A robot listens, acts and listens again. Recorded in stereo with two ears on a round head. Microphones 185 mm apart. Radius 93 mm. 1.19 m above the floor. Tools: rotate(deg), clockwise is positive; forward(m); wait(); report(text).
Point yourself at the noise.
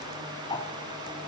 rotate(-20)
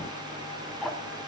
report("Found it: ticking, straight ahead, 1 to 2 m away.")